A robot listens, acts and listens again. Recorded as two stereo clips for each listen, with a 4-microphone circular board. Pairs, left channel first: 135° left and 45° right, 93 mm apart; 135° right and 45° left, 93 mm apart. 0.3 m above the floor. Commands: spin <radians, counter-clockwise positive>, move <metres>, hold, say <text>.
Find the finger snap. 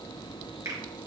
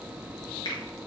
spin -1.66
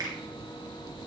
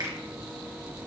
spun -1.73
say Facing the finger snap.